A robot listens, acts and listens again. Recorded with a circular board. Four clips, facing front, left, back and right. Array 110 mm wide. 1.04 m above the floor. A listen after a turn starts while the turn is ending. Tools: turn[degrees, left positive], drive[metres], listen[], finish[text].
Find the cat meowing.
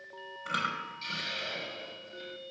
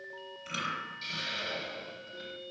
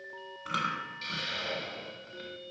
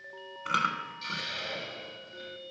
Action: listen[]
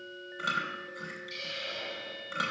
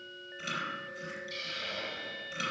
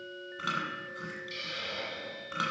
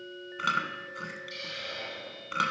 Action: listen[]
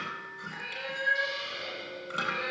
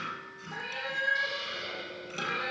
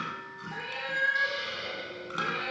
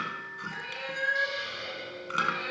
Thought: The cat meowing: straight behind.
Action: turn[180]
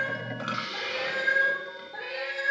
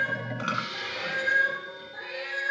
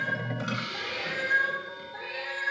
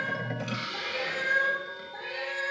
Thought: The cat meowing is now 15° right.
Action: turn[-15]
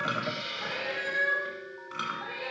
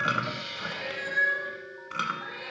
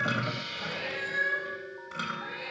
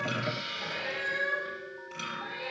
Action: finish[Facing the cat meowing.]